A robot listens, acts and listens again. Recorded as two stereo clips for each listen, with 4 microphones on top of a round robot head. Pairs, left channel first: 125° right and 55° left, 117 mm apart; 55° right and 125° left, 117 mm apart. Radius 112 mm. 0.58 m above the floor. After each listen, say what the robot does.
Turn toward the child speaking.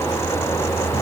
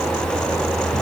Keep listening.
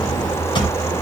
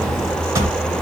Keep listening.
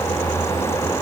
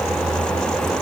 I can't make out a child speaking to turn to.